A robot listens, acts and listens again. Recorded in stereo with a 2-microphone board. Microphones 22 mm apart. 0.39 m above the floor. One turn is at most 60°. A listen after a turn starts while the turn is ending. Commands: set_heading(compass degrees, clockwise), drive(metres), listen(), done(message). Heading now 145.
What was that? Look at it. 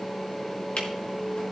set_heading(85)
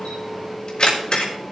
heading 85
set_heading(35)
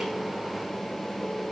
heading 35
listen()
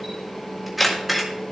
done("Facing the camera shutter, 2 to 4 m away.")